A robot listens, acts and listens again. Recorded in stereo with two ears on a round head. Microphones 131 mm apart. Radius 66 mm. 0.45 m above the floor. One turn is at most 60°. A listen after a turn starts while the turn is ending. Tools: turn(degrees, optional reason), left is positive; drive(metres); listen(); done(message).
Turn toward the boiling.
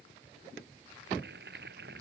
turn(degrees=-60)
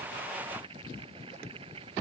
turn(degrees=-40, reason="So it is at 40° right.")
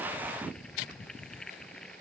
done("Found it: boiling, straight ahead.")